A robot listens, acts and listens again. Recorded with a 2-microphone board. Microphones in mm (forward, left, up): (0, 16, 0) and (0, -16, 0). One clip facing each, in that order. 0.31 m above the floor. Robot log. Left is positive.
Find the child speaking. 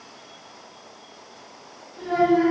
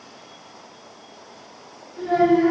note: The child speaking: about 25° right or 155° right.
cmd yaw -25
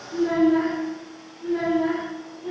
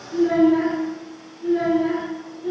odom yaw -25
note: So it is at 20° left.
cmd yaw +20
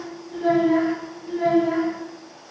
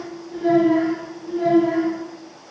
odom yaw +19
note: The child speaking is now 10° left.
cmd yaw +10
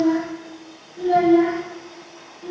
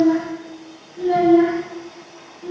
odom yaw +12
end: Found it: a child speaking, straight ahead, 2 to 4 m away.